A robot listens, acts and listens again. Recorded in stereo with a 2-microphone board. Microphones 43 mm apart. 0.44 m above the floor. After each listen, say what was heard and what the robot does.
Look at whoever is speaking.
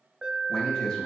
Turn 30° left.
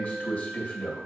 So it is at 135° left. Turn 135° left.
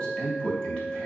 The man speaking is now 30° left. Turn 30° left.
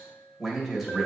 Facing the man speaking.